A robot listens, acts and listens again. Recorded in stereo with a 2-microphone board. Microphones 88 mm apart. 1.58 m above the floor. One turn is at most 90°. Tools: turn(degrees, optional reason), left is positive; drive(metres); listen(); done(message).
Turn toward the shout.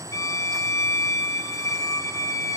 listen()
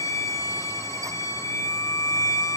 listen()
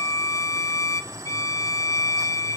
done("I can't make out a shout to turn to.")